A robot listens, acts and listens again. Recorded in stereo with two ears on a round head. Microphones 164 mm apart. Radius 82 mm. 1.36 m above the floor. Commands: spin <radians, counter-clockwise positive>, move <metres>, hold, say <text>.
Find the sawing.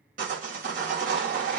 spin -0.87
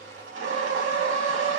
spin -1.40
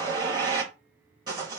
spin -0.44
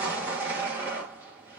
spin -0.17
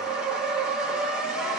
say Found it: sawing, straight ahead.